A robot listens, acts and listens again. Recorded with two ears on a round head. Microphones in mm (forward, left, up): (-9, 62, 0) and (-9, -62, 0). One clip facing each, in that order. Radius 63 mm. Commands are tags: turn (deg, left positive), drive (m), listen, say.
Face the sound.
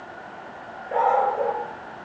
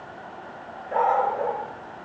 <turn deg="30"/>
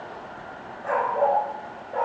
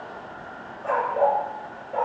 <say>Facing the dog barking, over 4 m away.</say>